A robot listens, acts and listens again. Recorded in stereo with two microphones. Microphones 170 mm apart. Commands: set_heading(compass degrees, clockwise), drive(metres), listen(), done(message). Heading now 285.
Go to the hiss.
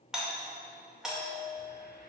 set_heading(225)
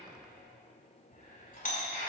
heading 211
set_heading(166)
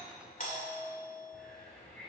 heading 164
drive(1.0)
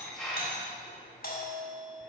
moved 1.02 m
drive(1.0)
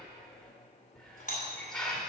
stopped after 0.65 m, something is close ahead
done("Arrived at the hiss, straight ahead.")